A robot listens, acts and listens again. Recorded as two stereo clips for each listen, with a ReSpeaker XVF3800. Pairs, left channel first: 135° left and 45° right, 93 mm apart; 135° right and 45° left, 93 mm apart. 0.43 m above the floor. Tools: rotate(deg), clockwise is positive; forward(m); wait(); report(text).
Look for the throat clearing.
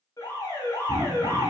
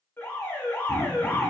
rotate(75)
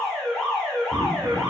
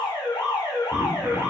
wait()
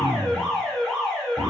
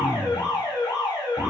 rotate(15)
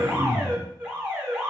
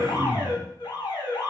report("Found it: throat clearing, straight ahead, 1 to 2 m away.")